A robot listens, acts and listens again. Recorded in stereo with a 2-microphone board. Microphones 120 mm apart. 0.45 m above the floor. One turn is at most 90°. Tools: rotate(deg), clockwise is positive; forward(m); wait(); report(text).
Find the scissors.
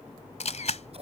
rotate(60)
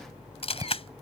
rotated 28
rotate(35)
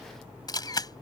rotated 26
rotate(15)
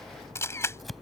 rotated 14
report("Facing the scissors.")